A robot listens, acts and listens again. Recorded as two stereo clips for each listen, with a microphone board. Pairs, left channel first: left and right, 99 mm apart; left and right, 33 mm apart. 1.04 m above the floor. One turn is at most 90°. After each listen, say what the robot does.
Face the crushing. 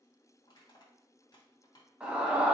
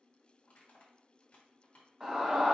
Turn 45° left.
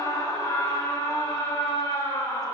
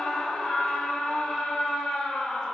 Keep listening.
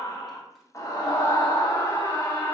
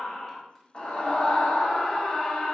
Keep listening.
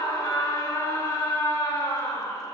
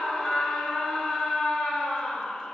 I heard crushing, but can't make it out now. It was about straight ahead or 90° left.